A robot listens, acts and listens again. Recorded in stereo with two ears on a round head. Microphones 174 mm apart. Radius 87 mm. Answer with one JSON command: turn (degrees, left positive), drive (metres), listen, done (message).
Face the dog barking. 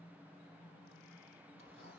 {"listen": true}
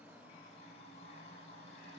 {"listen": true}
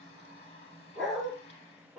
{"turn": 30}
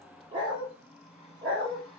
{"turn": -20}
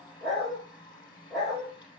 {"done": "Found it: a dog barking, straight ahead."}